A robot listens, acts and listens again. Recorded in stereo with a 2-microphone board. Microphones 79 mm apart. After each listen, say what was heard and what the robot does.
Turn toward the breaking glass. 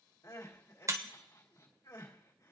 The breaking glass: about 40° right or 140° right. Turn 40° right.
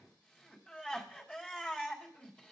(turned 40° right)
Keep listening.
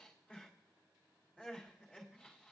I heard breaking glass, but can't make it out now. It was about straight ahead or 100° right.